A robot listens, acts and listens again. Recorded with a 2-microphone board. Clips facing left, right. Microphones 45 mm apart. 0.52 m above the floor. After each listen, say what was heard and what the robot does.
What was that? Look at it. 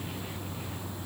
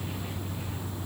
Keep listening.
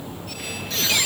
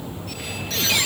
Turn 30° left.
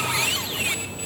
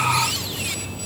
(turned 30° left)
Keep listening.
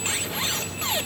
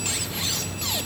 Keep listening.
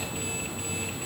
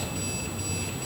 I heard a squeak, but can't make it out now. It was about 30° right or 150° left.